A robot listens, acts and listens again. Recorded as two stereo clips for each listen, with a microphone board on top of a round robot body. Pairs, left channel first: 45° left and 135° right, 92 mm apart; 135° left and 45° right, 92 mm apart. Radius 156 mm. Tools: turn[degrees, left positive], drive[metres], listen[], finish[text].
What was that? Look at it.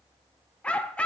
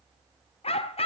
Thought: The dog barking: 125° left.
Action: turn[125]
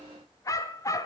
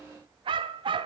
Thought: The dog barking is now 10° right.
Action: turn[-10]
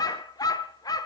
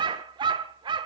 Action: finish[Found it: a dog barking, straight ahead, under 1 m away.]